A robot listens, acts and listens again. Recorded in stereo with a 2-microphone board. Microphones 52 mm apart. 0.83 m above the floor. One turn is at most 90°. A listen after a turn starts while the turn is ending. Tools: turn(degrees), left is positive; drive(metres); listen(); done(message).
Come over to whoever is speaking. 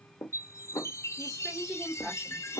turn(degrees=-30)
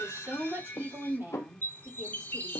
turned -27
turn(degrees=-90)
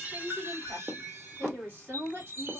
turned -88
turn(degrees=-50)
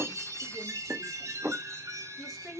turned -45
drive(metres=1.0)
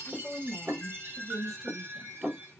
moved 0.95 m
turn(degrees=-10)
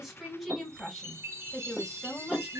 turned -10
drive(metres=1.0)
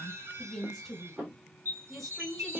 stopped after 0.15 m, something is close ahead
done("Arrived at the woman speaking, straight ahead.")